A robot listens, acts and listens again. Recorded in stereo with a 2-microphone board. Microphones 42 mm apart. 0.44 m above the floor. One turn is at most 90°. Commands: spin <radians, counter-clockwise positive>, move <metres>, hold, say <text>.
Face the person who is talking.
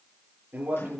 spin -0.61
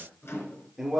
say Facing the man speaking, over 4 m away.